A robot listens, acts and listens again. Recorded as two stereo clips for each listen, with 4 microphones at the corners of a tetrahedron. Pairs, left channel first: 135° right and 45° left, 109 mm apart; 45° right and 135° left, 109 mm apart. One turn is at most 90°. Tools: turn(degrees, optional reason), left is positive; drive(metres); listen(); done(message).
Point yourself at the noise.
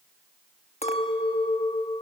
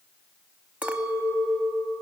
turn(degrees=-90, reason="The clink: 145° right.")
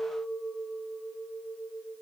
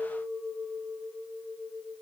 turn(degrees=-55, reason="The clink is now 55° right.")
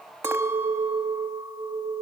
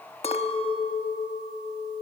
turn(degrees=-20, reason="The clink is now 20° right.")
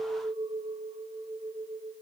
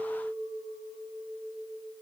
done("Facing the clink, under 1 m away.")